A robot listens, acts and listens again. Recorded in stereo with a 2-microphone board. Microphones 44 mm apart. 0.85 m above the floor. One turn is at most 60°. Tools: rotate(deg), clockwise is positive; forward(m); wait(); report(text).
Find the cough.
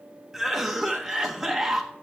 rotate(30)
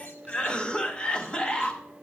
rotate(-25)
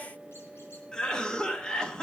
rotate(-20)
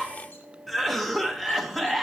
report("Found it: a cough, straight ahead.")